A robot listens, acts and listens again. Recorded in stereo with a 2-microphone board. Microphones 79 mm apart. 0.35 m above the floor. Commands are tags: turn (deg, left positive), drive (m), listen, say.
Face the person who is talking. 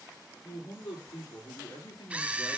<turn deg="50"/>
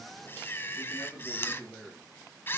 <say>Found it: a man speaking, straight ahead.</say>